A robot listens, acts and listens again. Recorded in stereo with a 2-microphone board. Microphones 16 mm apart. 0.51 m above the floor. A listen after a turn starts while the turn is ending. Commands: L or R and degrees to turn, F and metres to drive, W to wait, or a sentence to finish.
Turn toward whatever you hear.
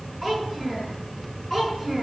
L20
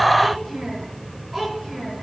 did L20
Facing the child speaking.